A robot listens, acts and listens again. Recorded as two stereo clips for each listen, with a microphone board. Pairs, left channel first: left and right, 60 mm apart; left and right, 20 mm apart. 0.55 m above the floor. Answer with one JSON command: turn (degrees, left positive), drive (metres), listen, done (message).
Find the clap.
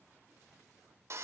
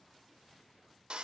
{"listen": true}
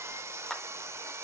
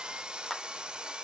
{"turn": 30}
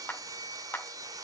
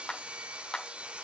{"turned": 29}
{"turn": 145}
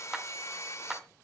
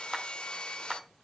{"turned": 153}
{"turn": -10}
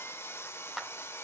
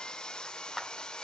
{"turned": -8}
{"done": "Facing the clap."}